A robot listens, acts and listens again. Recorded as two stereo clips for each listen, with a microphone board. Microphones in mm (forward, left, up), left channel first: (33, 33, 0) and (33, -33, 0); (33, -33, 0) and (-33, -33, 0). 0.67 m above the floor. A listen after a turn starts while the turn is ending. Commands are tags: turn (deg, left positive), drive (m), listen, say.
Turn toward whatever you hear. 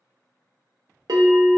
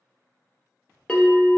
<turn deg="-75"/>
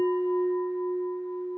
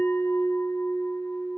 <say>Found it: a bell, straight ahead.</say>